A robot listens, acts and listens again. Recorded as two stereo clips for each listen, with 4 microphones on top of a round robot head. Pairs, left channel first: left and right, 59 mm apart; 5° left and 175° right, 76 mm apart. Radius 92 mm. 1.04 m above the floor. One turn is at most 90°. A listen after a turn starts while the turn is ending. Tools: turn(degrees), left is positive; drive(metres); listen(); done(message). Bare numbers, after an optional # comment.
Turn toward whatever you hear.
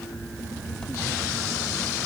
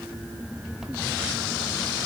listen()
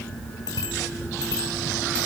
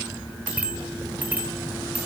# The bicycle bell: 110° left.
turn(90)
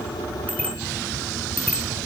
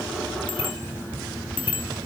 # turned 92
# The bicycle bell is now 20° left.
turn(20)
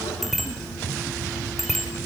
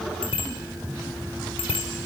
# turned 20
done("Facing the bicycle bell.")